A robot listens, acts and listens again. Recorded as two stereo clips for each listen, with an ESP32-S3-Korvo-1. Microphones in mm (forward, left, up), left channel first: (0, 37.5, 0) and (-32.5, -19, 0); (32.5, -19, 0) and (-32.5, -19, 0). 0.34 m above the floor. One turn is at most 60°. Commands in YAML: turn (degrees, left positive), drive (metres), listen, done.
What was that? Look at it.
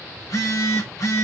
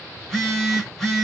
turn: 60
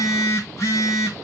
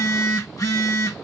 turn: 20
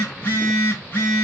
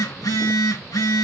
done: "Found it: a phone buzzing, straight ahead."